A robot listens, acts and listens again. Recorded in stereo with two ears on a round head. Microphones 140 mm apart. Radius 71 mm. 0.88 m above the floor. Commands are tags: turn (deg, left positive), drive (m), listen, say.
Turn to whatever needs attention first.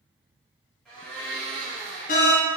<turn deg="50"/>
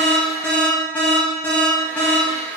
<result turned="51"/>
<turn deg="15"/>
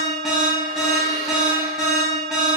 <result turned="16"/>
<say>Facing the alarm.</say>